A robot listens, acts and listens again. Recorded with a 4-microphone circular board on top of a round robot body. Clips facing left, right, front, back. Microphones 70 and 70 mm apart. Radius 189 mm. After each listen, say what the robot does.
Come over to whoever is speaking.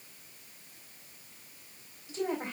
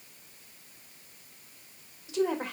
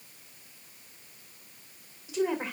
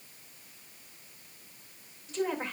Turn 85° right.
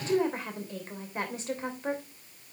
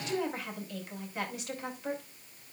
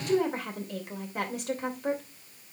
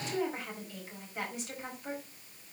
Turn 35° left.
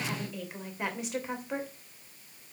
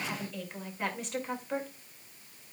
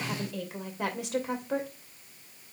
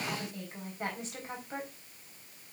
Drive 1.0 m forward.
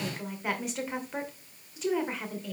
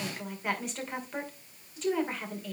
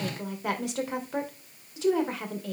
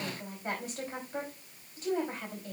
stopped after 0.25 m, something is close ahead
Something is in my way. I am facing the woman speaking but have not reached it.